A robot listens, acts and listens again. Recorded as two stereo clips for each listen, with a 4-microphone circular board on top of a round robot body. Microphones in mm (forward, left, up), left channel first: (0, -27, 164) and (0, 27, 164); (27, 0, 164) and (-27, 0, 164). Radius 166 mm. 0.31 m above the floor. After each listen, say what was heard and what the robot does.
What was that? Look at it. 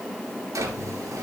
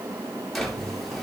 The drawer: 90° left. Turn 90° left.
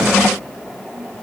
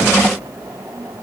Keep listening.
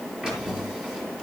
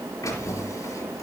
The drawer is now 15° left. Turn 15° left.
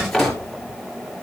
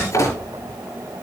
Found it: a drawer, straight ahead.